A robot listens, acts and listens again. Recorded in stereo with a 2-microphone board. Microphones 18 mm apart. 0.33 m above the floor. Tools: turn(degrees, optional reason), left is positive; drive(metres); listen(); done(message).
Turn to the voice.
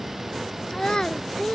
turn(degrees=50, reason="The child speaking: about 50° left or 130° left.")
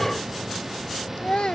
turn(degrees=70, reason="So it is at 70° left.")
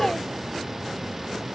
listen()
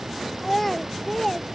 turn(degrees=10, reason="The child speaking is now 10° left.")
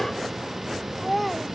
done("Found it: a child speaking, straight ahead.")